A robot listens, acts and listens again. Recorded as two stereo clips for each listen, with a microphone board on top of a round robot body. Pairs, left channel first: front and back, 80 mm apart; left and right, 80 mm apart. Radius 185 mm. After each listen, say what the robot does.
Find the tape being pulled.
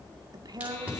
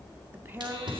Turn 105° right.
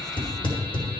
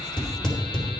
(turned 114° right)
Turn 10° left.
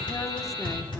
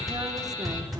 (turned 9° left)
Facing the tape being pulled.